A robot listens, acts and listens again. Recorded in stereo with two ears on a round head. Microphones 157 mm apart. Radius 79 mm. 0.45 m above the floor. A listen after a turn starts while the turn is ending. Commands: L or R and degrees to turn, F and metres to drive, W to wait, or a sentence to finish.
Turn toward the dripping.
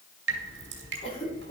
R75
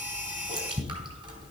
R30
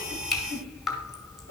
Found it: dripping, straight ahead.